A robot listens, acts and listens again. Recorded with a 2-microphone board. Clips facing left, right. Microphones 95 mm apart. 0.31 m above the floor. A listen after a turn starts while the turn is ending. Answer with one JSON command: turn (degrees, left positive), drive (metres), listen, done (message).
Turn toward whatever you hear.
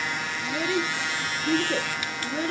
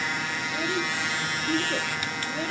{"turn": 70}
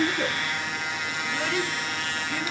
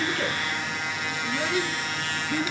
{"turn": -15}
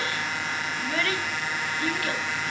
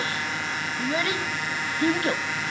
{"turn": -30}
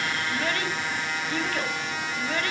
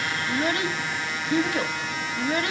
{"turn": -20}
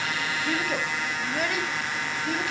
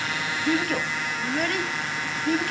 {"done": "Found it: a child speaking, straight ahead."}